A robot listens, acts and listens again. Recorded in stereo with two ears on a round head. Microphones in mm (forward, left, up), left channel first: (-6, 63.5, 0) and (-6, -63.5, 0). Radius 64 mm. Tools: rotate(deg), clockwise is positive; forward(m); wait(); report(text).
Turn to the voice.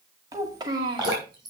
rotate(30)
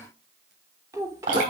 rotate(25)
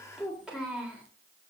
report("Facing the child speaking, 2 to 4 m away.")